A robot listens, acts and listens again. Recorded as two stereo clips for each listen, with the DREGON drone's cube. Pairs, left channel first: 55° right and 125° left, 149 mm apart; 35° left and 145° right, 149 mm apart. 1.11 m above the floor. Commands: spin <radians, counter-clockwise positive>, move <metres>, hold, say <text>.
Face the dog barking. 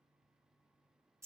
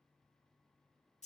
hold
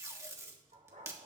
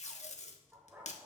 spin 2.36
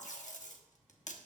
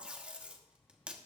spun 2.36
hold
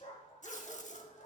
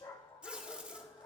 spin -0.44
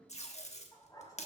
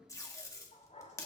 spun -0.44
spin 0.17
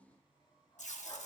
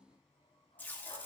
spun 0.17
hold
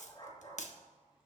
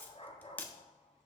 say Facing the dog barking.